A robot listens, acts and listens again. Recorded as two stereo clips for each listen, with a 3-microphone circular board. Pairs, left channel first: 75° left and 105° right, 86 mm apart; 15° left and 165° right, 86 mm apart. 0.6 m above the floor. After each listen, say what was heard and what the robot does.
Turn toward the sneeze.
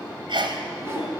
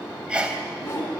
The sneeze: 90° right. Turn 90° right.
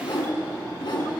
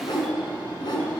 I heard a sneeze from this way, but can't make it out now.